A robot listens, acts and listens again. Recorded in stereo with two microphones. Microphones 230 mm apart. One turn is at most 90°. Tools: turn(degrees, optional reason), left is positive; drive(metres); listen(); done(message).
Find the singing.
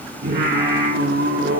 turn(degrees=-55, reason="The singing: about 55° right or 125° right.")
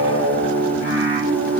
turn(degrees=-65, reason="So it is at 65° right.")
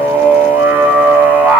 done("Facing the singing, over 4 m away.")